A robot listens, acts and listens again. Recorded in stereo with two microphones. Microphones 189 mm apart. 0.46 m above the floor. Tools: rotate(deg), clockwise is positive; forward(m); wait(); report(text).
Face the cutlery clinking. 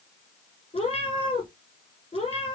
wait()
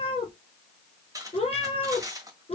rotate(20)
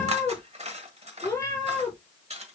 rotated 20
rotate(145)
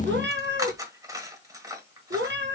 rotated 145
rotate(20)
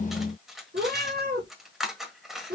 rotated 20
report("Found it: cutlery clinking, straight ahead, 1 to 2 m away.")